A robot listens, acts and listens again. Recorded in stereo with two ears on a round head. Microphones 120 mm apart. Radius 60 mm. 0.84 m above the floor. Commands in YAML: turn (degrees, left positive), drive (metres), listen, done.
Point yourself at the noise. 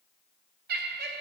turn: -90
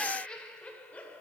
turn: 10
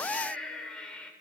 turn: 10
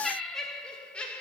turn: 10
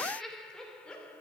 turn: 10
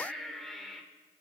done: "Found it: laughter, straight ahead."